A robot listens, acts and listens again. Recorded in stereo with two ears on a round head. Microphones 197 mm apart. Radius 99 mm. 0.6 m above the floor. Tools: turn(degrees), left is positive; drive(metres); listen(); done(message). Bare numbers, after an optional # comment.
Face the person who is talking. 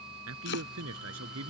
# The man speaking: about 70° right or 110° right.
turn(-70)
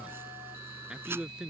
done("Found it: a man speaking, straight ahead.")